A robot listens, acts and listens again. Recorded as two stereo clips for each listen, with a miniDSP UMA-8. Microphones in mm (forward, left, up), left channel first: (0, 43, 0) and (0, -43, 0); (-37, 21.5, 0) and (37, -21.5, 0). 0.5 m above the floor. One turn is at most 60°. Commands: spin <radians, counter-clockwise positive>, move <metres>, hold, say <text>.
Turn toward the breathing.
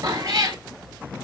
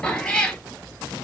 hold
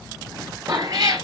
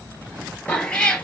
hold
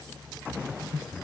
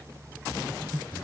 spin 0.96
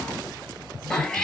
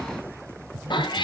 hold
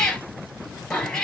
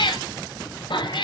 hold
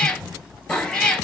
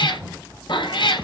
say I heard breathing from this way, but can't make it out now.